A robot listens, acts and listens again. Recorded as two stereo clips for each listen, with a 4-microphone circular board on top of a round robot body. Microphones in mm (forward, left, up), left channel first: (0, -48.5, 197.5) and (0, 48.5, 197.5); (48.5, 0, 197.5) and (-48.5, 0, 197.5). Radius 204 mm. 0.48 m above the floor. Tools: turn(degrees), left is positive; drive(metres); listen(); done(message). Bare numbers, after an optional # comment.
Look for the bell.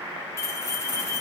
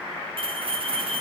# The bell: 150° right.
turn(-150)
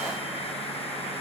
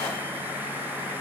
listen()
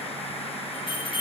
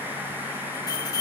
# The bell is now 50° right.
turn(-50)
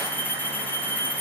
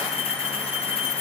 # The bell is now 20° right.
turn(-20)
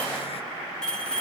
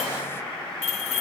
# The bell is now 10° right.
turn(-10)
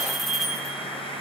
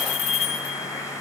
done("Facing the bell.")